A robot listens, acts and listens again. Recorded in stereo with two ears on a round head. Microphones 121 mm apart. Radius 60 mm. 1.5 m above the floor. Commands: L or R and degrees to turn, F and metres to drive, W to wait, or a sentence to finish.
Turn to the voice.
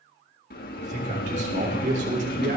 R65
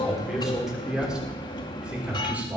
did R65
R10
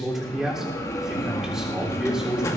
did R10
Found it: a man speaking, straight ahead, over 4 m away.